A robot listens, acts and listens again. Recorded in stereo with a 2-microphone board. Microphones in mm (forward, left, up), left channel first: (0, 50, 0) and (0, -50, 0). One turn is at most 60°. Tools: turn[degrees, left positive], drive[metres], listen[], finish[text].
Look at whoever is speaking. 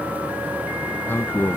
Thought: The man speaking: about 25° left or 155° left.
Action: turn[25]
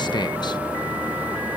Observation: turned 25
Action: listen[]
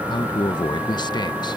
Thought: So it is at 130° left.
Action: turn[60]
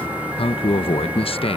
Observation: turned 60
Thought: The man speaking is now 80° left.
Action: turn[60]
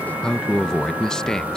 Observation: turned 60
Action: finish[Found it: a man speaking, straight ahead.]